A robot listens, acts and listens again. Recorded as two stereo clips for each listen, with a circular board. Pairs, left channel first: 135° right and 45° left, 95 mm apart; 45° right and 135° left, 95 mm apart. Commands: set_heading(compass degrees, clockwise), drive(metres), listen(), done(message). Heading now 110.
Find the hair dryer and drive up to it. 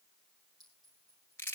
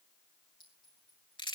listen()
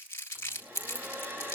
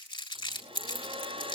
set_heading(355)
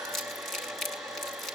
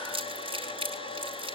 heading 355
set_heading(35)
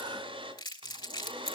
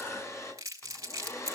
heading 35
set_heading(20)
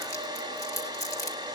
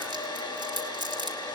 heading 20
drive(1.0)
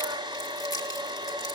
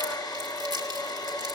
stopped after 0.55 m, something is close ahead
done("Something is in my way. I am facing the hair dryer but have not reached it.")